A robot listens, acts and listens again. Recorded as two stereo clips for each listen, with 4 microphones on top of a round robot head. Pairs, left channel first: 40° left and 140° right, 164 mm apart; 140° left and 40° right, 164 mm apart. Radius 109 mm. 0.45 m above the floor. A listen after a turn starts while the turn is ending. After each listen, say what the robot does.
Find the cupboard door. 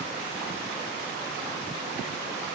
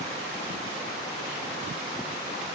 Keep listening.
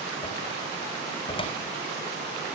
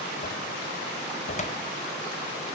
Turn 95° left.
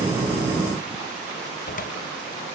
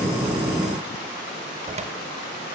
Turn 10° left.
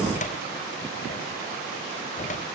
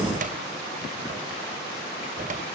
Facing the cupboard door.